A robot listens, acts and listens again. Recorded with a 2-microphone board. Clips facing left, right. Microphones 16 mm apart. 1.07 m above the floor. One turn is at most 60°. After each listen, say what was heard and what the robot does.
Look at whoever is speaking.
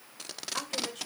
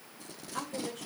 The woman speaking: about 30° left or 150° left. Turn 30° left.
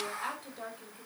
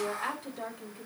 Facing the woman speaking.